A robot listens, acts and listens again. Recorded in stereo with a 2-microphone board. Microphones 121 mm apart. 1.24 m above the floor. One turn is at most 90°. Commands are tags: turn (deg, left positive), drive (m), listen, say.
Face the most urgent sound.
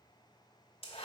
<listen/>
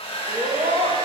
<turn deg="-60"/>
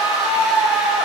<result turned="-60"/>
<turn deg="-35"/>
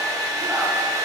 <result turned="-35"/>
<listen/>
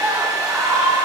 <turn deg="-10"/>
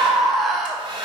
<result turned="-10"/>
<say>Facing the scream.</say>